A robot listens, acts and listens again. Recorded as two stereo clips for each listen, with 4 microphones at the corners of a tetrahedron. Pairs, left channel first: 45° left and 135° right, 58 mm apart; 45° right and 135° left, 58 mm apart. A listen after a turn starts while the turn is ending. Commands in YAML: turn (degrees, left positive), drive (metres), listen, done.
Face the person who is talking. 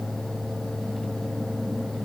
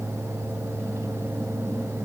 listen: true
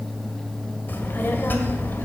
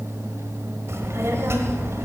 turn: 100
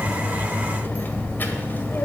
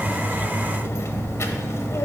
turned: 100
turn: -10
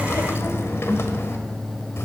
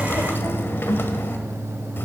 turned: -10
done: "Facing the child speaking, 1 to 2 m away."